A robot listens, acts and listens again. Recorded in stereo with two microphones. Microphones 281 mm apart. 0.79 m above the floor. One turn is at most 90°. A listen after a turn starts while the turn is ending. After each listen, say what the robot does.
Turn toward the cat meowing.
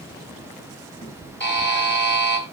Turn 15° left.
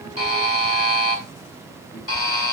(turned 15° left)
Turn 90° left.
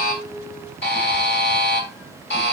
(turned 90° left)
Turn 45° left.
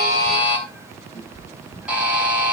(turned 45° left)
Turn 10° right.
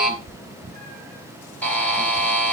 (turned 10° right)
Found it: a cat meowing, straight ahead.